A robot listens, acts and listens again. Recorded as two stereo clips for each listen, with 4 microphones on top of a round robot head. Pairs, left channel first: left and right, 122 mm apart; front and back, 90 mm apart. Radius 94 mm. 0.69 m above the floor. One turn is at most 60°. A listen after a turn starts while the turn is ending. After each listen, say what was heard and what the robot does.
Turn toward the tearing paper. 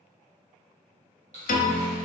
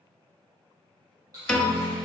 The tearing paper: 125° right. Turn 60° right.
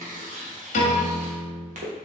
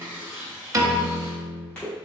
The tearing paper is now 80° right. Turn 60° right.
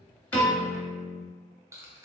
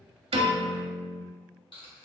The tearing paper is now 25° right. Turn 25° right.
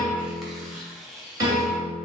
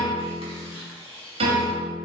Found it: tearing paper, straight ahead.